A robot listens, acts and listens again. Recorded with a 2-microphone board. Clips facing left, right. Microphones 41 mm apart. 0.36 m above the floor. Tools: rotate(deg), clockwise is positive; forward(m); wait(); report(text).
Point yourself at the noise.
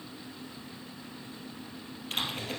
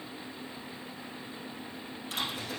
rotate(-50)
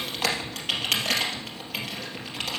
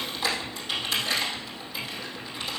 rotate(-80)
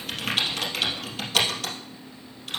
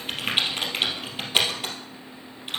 rotate(20)
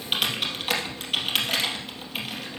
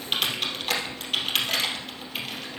report("Found it: typing on a keyboard, straight ahead.")